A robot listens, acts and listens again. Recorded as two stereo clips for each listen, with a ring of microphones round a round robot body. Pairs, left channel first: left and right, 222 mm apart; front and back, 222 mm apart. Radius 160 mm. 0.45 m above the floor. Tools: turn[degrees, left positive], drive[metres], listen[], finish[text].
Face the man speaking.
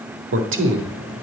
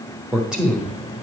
Thought: The man speaking: 95° right.
Action: turn[-95]
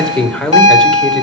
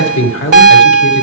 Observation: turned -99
Action: finish[Found it: a man speaking, straight ahead, 1 to 2 m away.]